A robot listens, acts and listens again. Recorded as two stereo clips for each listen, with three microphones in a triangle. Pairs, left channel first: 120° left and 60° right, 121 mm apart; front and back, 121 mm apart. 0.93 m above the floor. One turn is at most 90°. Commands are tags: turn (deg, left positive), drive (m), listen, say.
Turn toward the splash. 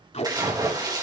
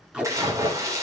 <turn deg="-90"/>
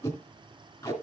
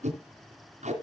<turn deg="-25"/>
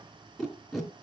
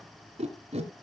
<say>I heard a splash from this way, but can't make it out now.</say>